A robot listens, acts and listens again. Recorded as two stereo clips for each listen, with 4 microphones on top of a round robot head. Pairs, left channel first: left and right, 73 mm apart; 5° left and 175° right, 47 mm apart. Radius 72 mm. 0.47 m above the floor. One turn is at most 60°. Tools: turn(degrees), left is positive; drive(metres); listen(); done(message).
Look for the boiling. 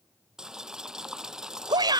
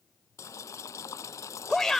turn(degrees=-10)
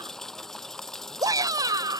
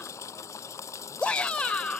done("Facing the boiling.")